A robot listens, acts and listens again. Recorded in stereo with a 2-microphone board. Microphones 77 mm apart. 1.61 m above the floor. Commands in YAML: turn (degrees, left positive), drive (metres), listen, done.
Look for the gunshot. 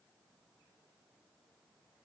listen: true
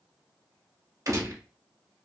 turn: -45
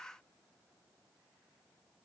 listen: true
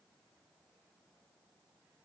done: "I heard a gunshot, but can't make it out now. It was about straight ahead or 90° right."